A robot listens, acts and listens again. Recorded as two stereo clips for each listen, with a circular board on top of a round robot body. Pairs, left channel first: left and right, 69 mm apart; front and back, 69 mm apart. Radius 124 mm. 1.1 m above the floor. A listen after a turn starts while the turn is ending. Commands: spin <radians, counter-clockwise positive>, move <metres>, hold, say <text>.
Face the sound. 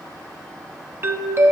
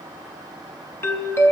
spin -0.70
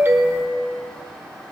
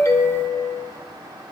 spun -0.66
say Found it: a doorbell, straight ahead.